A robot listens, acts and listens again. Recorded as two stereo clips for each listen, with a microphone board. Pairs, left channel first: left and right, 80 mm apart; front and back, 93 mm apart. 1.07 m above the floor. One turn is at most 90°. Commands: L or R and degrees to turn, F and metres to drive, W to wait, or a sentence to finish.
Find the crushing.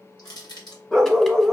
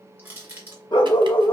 L90
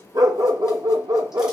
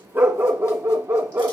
L20
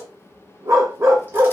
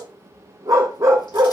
W
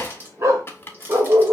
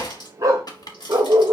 R30
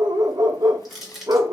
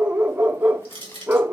Found it: crushing, straight ahead, 1 to 2 m away.